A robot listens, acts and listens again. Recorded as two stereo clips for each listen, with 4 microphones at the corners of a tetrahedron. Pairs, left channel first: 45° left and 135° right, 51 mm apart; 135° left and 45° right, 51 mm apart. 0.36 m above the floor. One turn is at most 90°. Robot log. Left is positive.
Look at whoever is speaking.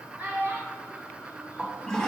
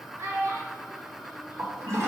note: The child speaking: 75° right.
cmd yaw -75
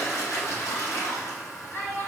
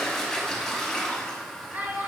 note: The child speaking is now 10° left.
cmd yaw +10
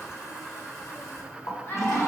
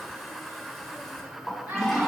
end: Facing the child speaking.